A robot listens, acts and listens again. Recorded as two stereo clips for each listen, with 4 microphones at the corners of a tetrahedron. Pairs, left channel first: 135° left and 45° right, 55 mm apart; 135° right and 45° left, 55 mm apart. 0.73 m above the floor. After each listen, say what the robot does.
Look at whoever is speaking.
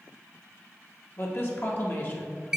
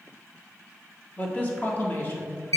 Turn 180° left.
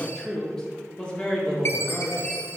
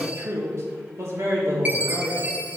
Turn 75° left.
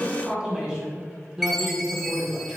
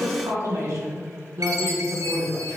Turn 30° left.
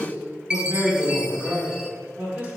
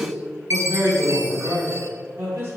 Turn 15° left.
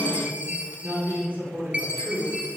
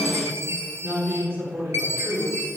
Facing the man speaking, 2 to 4 m away.